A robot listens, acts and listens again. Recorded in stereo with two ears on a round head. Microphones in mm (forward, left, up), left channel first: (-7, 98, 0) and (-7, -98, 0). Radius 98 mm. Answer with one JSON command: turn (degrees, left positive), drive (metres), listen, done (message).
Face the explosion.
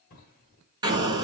{"turn": -20}
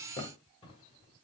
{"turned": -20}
{"listen": true}
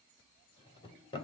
{"done": "I heard an explosion, but can't make it out now. It was about straight ahead or 140° right."}